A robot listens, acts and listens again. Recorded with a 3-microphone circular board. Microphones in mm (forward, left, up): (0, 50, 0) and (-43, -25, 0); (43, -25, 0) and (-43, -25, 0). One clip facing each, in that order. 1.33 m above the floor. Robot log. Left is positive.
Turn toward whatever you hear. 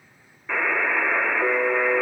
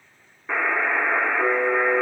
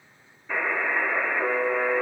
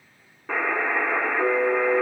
note: The buzzer: 170° left.
cmd yaw +170
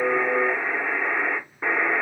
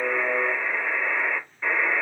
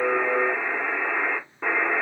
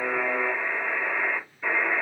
end: Facing the buzzer.